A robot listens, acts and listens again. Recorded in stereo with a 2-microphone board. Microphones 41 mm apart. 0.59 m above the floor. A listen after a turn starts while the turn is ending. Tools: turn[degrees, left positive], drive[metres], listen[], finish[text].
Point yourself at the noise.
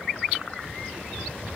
Action: listen[]
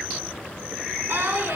Thought: The singing: about 65° right or 115° right.
Action: turn[-65]
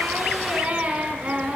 Thought: So it is at 50° right.
Action: turn[-50]
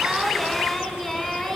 Action: finish[Found it: singing, straight ahead, 1 to 2 m away.]